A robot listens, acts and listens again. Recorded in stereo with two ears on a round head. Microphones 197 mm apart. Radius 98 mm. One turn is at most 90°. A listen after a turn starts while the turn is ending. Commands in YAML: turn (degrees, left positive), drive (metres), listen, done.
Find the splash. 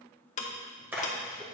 turn: -30
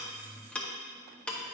listen: true
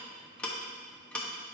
done: "I heard a splash, but can't make it out now. It was about 20° left or 140° right."